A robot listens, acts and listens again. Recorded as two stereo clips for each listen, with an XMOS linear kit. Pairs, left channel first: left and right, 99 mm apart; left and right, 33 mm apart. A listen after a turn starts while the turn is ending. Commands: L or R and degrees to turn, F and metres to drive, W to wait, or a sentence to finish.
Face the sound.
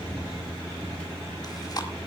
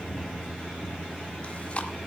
L40
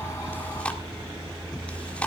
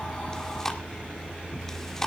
L15
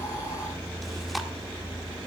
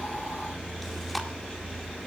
W
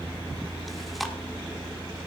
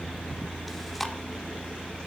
Facing the chewing.